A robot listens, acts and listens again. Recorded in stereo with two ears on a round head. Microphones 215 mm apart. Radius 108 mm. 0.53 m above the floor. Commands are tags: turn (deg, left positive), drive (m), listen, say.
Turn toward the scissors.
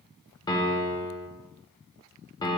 <listen/>
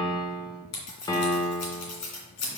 <turn deg="90"/>
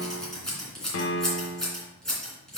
<say>Found it: scissors, straight ahead, 2 to 4 m away.</say>